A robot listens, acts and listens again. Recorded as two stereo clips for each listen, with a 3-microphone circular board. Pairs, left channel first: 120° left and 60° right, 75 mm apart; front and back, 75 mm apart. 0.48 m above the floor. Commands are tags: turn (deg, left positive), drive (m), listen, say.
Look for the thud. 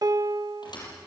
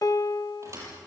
<turn deg="130"/>
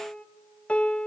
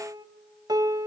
<say>Facing where the thud came from. I can't hear it now.</say>